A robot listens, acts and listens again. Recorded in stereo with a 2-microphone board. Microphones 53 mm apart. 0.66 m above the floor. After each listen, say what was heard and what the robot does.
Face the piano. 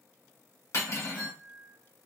The piano: about 55° left or 125° left. Turn 55° left.
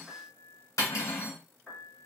Facing the piano, 1 to 2 m away.